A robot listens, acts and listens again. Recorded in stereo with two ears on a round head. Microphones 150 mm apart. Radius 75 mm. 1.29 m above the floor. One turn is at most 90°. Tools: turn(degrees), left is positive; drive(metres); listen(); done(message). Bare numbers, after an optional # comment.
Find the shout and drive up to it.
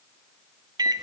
listen()
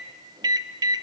listen()
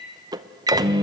done("I can't make out a shout to turn to.")